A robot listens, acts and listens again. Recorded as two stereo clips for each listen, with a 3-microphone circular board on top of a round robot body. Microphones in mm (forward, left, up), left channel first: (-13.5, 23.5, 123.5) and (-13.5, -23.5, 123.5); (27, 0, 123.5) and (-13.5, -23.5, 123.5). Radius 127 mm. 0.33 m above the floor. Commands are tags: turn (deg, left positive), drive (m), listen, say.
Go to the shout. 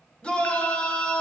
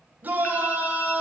<turn deg="155"/>
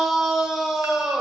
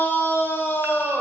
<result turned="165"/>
<turn deg="-10"/>
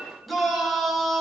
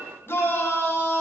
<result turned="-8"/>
<drive m="1.0"/>
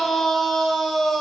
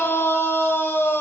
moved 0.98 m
<drive m="1.0"/>
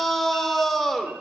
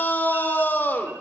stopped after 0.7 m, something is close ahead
<say>Arrived at the shout, straight ahead.</say>